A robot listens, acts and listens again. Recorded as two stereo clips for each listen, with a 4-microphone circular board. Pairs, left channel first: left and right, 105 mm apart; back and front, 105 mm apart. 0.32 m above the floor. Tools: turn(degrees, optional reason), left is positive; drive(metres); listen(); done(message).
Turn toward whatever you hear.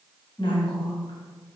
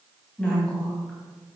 turn(degrees=105, reason="The woman speaking: 105° left.")
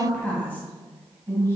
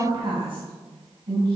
turn(degrees=25, reason="The woman speaking is now 25° left.")
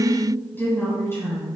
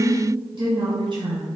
turn(degrees=30, reason="The woman speaking is now 30° left.")
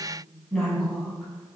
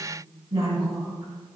done("Facing the woman speaking, 2 to 4 m away.")